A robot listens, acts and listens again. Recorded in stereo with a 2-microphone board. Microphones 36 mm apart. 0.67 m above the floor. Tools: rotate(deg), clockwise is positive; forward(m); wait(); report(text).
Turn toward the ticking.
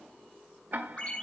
rotate(60)
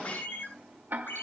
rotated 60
rotate(55)
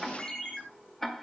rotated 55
rotate(-10)
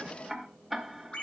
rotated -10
report("Facing the ticking, 2 to 4 m away.")